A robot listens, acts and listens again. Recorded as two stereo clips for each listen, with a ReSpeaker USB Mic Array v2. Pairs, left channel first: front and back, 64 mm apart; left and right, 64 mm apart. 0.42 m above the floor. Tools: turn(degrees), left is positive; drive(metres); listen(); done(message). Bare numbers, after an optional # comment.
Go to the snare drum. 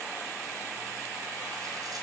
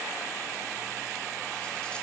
listen()
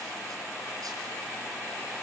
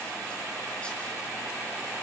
listen()
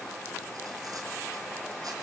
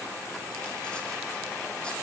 done("I can't make out a snare drum to turn to.")